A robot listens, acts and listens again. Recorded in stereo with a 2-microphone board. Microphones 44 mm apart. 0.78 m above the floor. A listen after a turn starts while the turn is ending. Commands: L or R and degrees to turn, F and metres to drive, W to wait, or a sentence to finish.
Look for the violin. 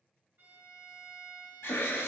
R60
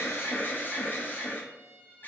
R60
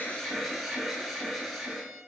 W
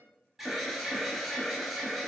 W
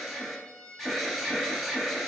Facing the violin, 1 to 2 m away.